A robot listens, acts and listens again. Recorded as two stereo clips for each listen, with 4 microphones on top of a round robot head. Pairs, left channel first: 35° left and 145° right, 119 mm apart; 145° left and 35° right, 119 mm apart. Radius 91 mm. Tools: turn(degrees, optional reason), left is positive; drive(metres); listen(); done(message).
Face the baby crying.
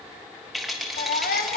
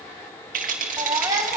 turn(degrees=25, reason="The baby crying: 25° left.")
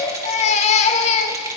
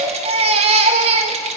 done("Facing the baby crying, 1 to 2 m away.")